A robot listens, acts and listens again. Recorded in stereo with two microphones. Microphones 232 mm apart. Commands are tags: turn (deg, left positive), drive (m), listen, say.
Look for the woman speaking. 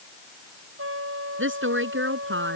<turn deg="-55"/>
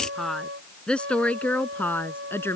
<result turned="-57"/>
<turn deg="10"/>
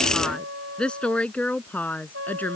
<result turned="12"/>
<say>Found it: a woman speaking, straight ahead.</say>